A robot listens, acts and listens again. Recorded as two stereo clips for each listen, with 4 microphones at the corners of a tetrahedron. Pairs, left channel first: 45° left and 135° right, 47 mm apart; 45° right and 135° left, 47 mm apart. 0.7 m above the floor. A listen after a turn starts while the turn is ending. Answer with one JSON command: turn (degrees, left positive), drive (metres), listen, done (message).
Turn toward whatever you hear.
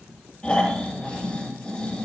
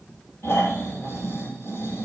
{"turn": -25}
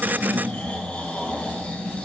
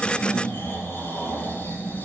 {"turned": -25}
{"done": "Found it: snoring, straight ahead."}